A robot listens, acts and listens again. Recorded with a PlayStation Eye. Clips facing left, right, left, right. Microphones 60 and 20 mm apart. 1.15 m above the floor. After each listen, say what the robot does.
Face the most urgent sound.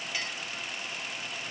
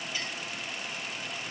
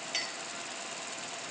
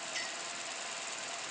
Keep listening.
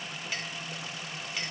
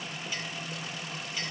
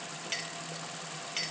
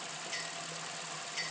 Keep listening.
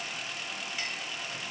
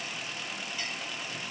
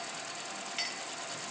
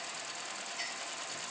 I can't make out anything urgent to turn to.